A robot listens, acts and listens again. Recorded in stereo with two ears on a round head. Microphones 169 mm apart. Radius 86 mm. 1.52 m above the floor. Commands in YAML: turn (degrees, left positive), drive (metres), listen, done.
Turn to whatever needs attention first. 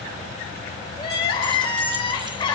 turn: 25
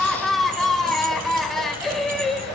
done: "Facing the crying, 2 to 4 m away."